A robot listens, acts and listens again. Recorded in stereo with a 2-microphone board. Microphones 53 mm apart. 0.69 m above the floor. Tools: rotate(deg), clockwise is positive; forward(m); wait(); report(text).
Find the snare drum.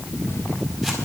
wait()
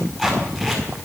wait()
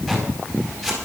report("I can't make out a snare drum to turn to.")